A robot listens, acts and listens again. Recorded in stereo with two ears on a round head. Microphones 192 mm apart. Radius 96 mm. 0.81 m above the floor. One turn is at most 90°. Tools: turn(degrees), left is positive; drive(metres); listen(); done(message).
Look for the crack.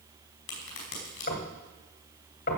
turn(degrees=60)
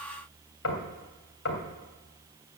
listen()
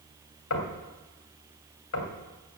done("I heard a crack, but can't make it out now. It was about straight ahead or 60° left.")